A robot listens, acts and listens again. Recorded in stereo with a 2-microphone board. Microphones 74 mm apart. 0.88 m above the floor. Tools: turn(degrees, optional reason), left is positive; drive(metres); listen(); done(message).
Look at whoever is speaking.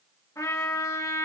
listen()
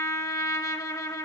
listen()
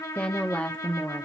turn(degrees=20, reason="The woman speaking: about 20° left or 160° left.")
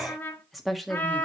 done("Found it: a woman speaking, straight ahead, 1 to 2 m away.")